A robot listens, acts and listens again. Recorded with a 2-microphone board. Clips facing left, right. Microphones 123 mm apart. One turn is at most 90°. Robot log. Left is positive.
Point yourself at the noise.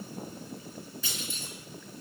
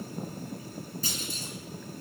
note: The clunk: about 40° right or 140° right.
cmd yaw -40
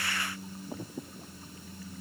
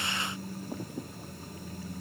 cmd idle
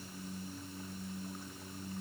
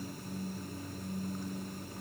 end: I heard a clunk, but can't make it out now. It was about straight ahead or 100° right.